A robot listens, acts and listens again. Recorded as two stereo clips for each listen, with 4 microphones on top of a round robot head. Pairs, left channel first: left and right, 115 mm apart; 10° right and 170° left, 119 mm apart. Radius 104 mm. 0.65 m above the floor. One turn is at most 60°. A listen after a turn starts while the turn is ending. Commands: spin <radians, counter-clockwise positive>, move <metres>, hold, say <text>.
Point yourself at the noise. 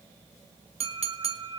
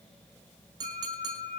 spin -1.05
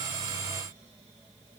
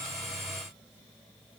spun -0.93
spin -1.05
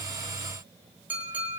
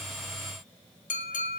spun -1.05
spin -0.17
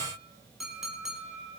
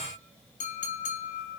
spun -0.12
say Facing the clink, 1 to 2 m away.